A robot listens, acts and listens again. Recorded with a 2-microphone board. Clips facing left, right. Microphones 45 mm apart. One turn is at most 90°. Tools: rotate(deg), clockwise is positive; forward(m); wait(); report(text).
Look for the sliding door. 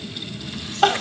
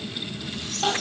wait()
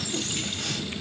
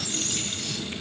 wait()
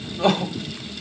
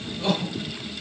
report("I can't make out a sliding door, only crying.")